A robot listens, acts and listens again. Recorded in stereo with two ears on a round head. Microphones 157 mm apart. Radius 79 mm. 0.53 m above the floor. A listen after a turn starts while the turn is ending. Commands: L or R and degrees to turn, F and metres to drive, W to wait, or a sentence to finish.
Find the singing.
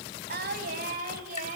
R45
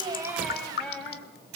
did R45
L10
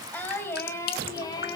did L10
L25
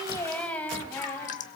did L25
L15
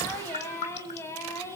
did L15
L15
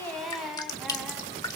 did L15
Found it: singing, straight ahead.